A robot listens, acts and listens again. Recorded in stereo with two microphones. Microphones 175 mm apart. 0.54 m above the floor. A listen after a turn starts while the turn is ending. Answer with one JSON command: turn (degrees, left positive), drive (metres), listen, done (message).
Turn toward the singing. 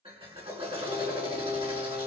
{"turn": -60}
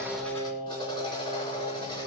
{"turn": -60}
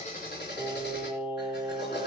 {"done": "Facing the singing."}